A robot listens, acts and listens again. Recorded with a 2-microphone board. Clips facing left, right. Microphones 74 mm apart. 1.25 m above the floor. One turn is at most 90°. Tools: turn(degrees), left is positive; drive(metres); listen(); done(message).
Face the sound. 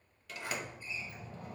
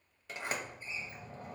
turn(degrees=-25)
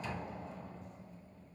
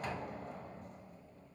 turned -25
turn(degrees=-90)
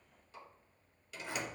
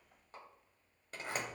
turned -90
turn(degrees=-50)
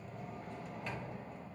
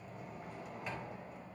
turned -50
turn(degrees=-10)
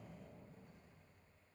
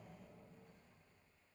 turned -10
done("Found it: a sliding door, straight ahead.")